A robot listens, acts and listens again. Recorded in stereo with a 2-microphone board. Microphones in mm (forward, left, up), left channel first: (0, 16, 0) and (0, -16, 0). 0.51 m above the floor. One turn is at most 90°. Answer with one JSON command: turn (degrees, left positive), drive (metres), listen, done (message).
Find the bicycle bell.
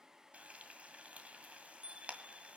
{"turn": -35}
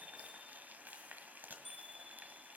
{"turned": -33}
{"done": "Found it: a bicycle bell, straight ahead."}